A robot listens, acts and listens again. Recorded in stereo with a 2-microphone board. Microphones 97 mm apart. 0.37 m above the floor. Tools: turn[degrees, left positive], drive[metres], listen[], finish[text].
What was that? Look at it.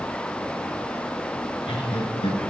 Thought: The laughter: about 70° left or 110° left.
Action: turn[70]
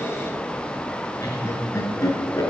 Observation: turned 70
Thought: So it is at 35° left.
Action: turn[35]
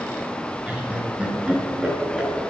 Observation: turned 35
Thought: The laughter is now 10° right.
Action: turn[-10]
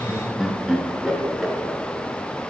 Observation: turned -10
Action: finish[Found it: laughter, straight ahead.]